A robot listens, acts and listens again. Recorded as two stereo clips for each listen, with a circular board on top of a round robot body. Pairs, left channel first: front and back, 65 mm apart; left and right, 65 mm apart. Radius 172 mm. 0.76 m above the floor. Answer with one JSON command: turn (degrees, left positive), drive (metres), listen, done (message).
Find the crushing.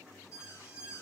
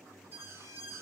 {"listen": true}
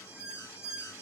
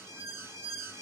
{"listen": true}
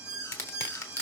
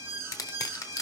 {"turn": 45}
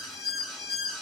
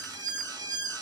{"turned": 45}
{"listen": true}
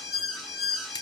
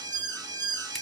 {"listen": true}
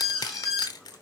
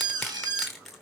{"done": "Found it: crushing, straight ahead, under 1 m away."}